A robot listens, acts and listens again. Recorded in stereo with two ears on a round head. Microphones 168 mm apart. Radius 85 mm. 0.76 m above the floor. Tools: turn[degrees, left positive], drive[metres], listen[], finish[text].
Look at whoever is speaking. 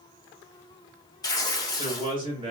Thought: The man speaking: about 30° right or 150° right.
Action: turn[-30]
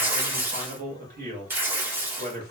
Thought: So it is at 115° right.
Action: turn[-115]
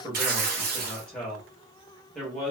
Action: finish[Found it: a man speaking, straight ahead.]